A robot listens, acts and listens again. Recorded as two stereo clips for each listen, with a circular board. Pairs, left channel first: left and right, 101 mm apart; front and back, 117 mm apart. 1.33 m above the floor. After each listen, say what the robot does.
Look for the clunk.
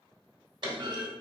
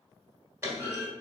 Turn 115° right.
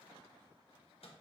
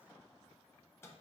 Facing where the clunk came from. I can't hear it now.